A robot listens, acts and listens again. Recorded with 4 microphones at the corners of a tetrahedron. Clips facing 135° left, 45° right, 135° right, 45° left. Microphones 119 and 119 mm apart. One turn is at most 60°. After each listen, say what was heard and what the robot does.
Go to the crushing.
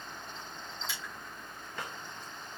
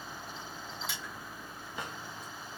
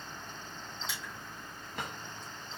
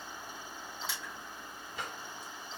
Keep listening.
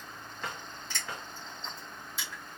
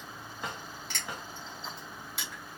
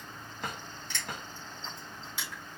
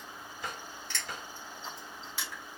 The crushing: 60° right. Turn 60° right.
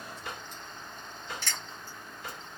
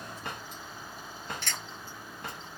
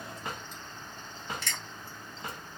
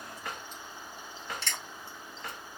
The crushing is now 15° right. Turn 15° right.
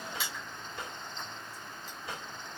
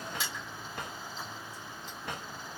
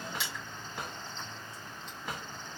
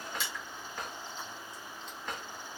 Drive 1.0 m forward.
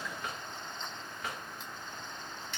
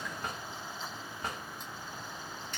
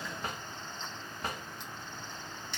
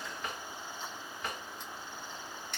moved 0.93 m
Drive 1.0 m forward.
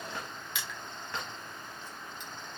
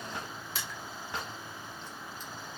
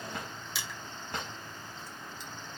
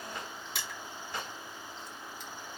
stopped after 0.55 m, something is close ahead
I am next to the crushing.